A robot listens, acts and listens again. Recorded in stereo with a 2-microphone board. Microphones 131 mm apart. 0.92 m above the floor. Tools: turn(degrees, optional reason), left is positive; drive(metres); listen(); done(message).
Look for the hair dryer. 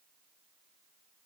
listen()
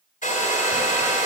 turn(degrees=90)
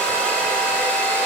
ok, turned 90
turn(degrees=10, reason="So it is at 10° left.")
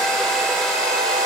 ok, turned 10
done("Facing the hair dryer.")